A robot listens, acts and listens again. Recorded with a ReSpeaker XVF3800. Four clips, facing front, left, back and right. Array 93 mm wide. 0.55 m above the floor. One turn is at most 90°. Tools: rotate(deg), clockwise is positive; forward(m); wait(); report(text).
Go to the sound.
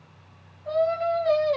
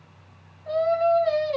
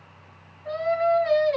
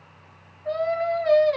rotate(90)
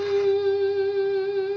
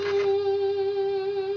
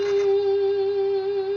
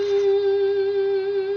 rotate(70)
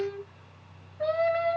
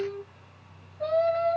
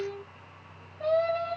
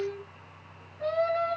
rotate(15)
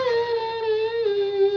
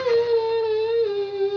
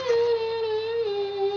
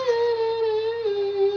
forward(1.0)
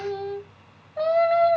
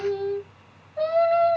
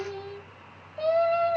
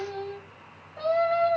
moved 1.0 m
forward(1.0)
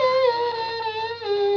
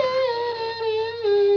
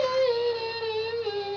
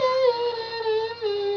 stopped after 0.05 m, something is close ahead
report("I am next to the singing.")